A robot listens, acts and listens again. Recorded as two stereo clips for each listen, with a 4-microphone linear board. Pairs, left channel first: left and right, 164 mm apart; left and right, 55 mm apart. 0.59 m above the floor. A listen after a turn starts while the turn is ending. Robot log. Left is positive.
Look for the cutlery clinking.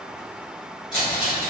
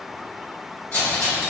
note: The cutlery clinking: about 30° left or 150° left.
cmd yaw +30
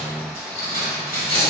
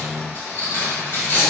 note: So it is at 120° left.
cmd yaw +120
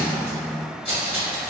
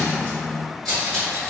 end: Facing the cutlery clinking, 1 to 2 m away.